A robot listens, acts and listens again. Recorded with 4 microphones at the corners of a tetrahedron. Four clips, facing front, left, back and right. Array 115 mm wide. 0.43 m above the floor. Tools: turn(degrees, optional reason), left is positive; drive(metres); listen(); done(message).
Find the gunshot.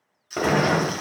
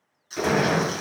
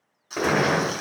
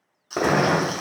turn(degrees=-80, reason="The gunshot: 80° right.")
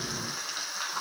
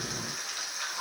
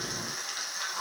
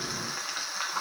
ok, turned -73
turn(degrees=-10, reason="Nothing new. It was at 10° right.")
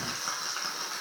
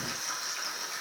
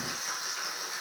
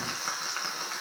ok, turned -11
done("I heard a gunshot from this way, but can't make it out now.")